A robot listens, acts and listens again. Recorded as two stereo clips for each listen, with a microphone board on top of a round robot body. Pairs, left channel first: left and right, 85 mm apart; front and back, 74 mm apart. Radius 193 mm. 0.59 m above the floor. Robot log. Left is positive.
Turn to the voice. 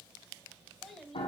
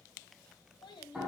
end: Facing the child speaking.